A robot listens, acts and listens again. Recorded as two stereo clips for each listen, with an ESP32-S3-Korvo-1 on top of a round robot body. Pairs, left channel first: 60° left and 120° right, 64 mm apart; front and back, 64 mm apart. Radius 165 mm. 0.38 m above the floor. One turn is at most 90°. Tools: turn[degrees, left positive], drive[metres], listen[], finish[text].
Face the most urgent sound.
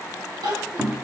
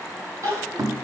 Thought: The crying: 130° right.
Action: turn[-90]
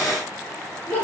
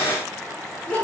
Thought: The crying is now 55° right.
Action: turn[-55]
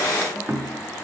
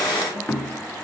Action: listen[]
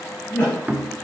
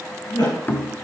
Action: finish[Found it: crying, straight ahead.]